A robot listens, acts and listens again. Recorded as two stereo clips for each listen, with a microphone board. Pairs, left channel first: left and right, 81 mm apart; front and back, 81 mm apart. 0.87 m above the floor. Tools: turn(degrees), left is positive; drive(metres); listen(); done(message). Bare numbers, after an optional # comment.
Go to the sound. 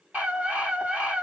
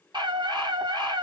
# The scream: 160° right.
turn(-160)
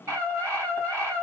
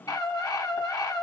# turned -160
# The scream is now 35° right.
turn(-35)
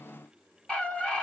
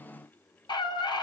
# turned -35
# The scream is now 10° left.
turn(10)
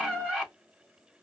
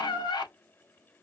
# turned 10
drive(1.0)
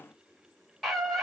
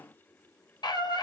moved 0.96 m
drive(1.0)
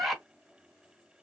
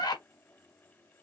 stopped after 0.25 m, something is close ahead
done("Arrived at the scream, straight ahead.")